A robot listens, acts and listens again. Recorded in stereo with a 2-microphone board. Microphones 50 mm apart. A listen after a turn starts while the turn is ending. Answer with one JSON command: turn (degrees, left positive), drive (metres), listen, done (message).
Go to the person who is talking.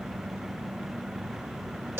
{"listen": true}
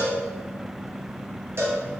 {"listen": true}
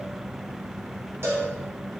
{"done": "I can't make out anyone speaking, only a cowbell."}